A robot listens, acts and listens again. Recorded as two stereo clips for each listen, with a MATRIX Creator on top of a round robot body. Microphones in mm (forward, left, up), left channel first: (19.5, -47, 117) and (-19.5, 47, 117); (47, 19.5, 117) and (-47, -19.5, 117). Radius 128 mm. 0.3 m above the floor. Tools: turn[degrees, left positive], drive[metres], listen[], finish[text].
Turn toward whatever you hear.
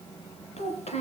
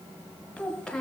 Thought: The child speaking: 60° right.
Action: turn[-60]
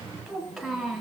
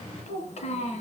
Thought: The child speaking is now 20° left.
Action: turn[20]
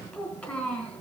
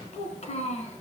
Thought: The child speaking is now 10° left.
Action: turn[10]
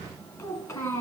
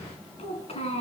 Action: finish[Found it: a child speaking, straight ahead.]